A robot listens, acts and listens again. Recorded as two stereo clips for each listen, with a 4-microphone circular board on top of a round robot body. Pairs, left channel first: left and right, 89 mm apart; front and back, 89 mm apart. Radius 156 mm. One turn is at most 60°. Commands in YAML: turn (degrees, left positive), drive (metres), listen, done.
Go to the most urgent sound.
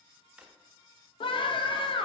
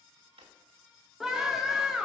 turn: 60
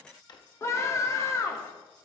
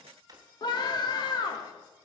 turn: 35
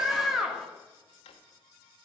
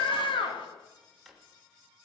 drive: 1.0
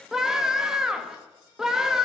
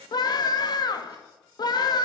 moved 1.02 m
drive: 1.0
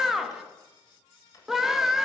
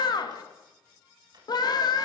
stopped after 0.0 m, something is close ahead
done: "I am next to the scream."